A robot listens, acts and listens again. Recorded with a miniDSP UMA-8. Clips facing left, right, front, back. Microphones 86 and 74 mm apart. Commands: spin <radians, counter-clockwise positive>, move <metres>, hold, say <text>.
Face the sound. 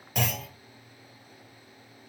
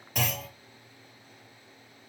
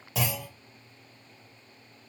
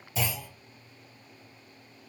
say Facing the clunk, 1 to 2 m away.